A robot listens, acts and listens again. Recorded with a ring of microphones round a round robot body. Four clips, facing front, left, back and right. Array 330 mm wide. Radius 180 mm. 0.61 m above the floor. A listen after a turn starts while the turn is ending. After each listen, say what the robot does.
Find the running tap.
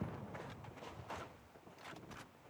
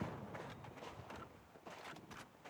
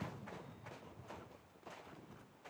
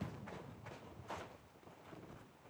Keep listening.
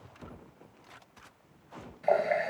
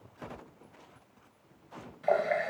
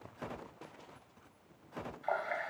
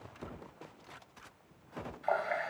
Turn 40° left.
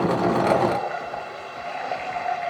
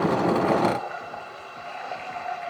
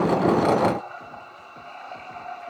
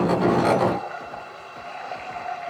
Found it: a running tap, straight ahead.